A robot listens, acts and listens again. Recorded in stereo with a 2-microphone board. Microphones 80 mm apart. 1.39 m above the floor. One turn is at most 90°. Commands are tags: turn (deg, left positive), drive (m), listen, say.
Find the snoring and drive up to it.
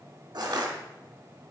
<listen/>
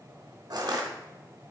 <listen/>
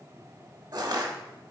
<say>I can't make out snoring, only crushing.</say>